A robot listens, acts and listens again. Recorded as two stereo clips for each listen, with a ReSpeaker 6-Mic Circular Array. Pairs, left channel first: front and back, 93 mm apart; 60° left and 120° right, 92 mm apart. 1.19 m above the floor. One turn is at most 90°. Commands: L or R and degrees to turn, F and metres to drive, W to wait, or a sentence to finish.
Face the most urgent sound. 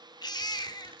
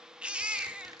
R40
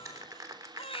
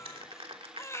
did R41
Found it: a baby crying, straight ahead, 1 to 2 m away.